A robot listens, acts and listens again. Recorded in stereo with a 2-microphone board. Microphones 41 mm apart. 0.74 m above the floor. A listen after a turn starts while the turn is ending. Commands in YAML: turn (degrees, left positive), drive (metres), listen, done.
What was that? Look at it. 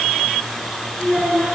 turn: 30
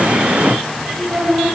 turn: -25
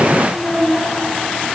turn: -15
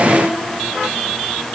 done: "Found it: a child speaking, straight ahead, over 4 m away."